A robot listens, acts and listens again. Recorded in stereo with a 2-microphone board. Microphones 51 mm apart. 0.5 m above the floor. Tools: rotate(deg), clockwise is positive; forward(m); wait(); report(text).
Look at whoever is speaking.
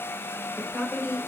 rotate(-15)
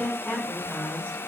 rotate(-150)
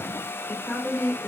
rotate(15)
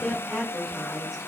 report("Facing the woman speaking.")